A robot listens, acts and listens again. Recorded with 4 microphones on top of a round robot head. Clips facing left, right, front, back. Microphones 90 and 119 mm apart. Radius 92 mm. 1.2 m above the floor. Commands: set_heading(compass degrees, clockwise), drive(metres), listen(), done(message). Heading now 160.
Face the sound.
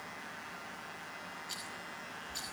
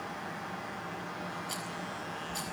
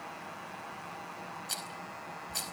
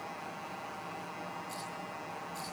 set_heading(190)
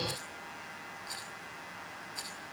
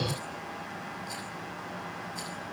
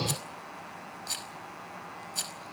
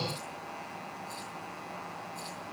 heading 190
done("Found it: a rattle, straight ahead, over 4 m away.")